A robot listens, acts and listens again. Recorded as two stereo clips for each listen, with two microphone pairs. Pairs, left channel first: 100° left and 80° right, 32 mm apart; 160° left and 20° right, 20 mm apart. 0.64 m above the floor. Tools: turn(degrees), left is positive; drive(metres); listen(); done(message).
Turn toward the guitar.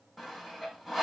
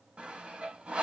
listen()
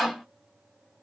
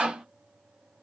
listen()
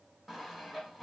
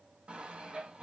done("I can't make out a guitar to turn to.")